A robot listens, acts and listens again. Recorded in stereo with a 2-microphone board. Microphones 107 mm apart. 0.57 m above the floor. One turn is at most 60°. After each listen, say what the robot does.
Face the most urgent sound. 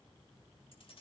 Keep listening.
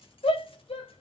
Turn 60° left.
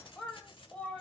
Turn 10° left.
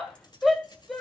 Facing the shout.